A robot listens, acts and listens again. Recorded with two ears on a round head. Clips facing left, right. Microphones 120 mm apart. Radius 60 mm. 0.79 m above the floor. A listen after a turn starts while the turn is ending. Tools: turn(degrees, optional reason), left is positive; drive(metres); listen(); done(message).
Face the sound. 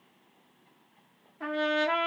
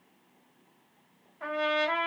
turn(degrees=55, reason="The trumpet: about 55° left or 125° left.")
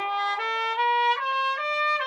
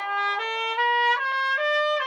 done("Found it: a trumpet, straight ahead, 1 to 2 m away.")